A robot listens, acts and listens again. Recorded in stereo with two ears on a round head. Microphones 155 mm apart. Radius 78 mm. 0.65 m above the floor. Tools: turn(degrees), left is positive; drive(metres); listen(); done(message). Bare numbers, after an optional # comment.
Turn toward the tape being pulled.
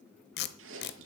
# The tape being pulled: about 65° left or 115° left.
turn(65)
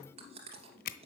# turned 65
# So it is at 50° left.
turn(50)
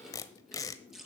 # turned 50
# The tape being pulled is now 20° left.
turn(20)
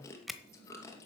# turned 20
done("Found it: tape being pulled, straight ahead.")